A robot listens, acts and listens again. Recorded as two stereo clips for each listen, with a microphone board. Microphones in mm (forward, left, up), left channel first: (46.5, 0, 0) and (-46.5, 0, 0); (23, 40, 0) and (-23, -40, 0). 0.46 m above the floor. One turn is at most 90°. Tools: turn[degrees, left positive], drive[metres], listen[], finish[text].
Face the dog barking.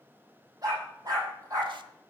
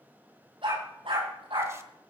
Thought: The dog barking: 130° right.
Action: turn[-90]
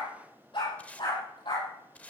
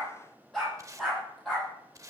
Thought: The dog barking is now 30° right.
Action: turn[-30]
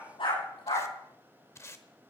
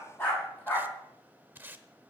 Thought: The dog barking is now 10° right.
Action: turn[-10]
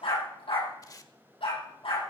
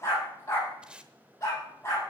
Action: finish[Facing the dog barking, over 4 m away.]